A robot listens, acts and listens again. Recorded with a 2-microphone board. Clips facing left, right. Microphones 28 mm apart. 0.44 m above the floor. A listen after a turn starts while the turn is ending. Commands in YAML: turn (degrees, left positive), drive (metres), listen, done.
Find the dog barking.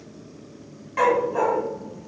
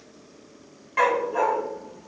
turn: -30
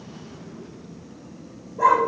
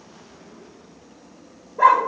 turn: -140
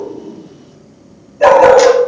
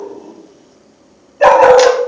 turn: -30
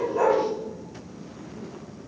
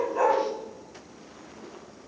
turn: -15
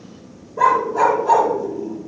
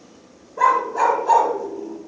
done: "Found it: a dog barking, straight ahead, under 1 m away."